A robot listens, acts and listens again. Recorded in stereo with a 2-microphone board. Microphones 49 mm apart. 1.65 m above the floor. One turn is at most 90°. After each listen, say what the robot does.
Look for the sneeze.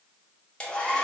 Keep listening.
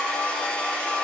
Keep listening.
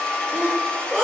Turn 25° right.
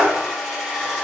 Turn 90° right.
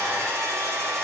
Turn 35° right.
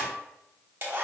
Facing where the sneeze came from. I can't hear it now.